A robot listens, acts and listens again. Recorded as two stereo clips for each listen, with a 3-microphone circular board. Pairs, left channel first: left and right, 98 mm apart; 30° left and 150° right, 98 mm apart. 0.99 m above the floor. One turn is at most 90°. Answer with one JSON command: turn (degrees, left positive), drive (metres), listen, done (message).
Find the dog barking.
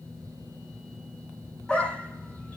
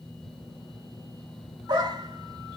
{"turn": 90}
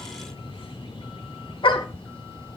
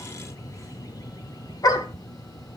{"turn": 70}
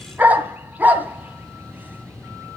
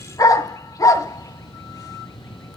{"turn": -20}
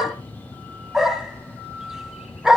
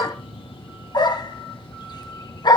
{"done": "Facing the dog barking, 2 to 4 m away."}